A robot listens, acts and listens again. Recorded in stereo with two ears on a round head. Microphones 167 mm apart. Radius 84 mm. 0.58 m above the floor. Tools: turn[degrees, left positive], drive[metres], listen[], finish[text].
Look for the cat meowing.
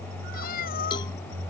Thought: The cat meowing: about 50° left or 130° left.
Action: turn[50]
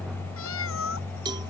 Thought: So it is at 80° left.
Action: turn[80]
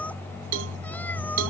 Thought: The cat meowing is now 10° left.
Action: turn[10]
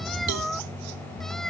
Action: finish[Found it: a cat meowing, straight ahead.]